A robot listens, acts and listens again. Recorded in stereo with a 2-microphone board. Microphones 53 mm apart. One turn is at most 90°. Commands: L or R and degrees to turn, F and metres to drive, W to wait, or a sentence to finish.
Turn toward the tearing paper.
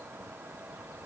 W
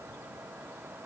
W
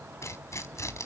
L65
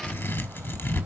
L50
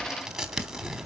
Found it: tearing paper, straight ahead, 1 to 2 m away.